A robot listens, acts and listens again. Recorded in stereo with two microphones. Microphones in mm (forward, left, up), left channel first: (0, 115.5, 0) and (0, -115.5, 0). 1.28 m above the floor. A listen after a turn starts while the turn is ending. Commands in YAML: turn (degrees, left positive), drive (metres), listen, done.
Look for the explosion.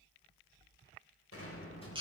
turn: 70
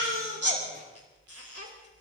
listen: true
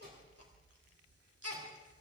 done: "I heard an explosion, but can't make it out now. It was about straight ahead or 40° left."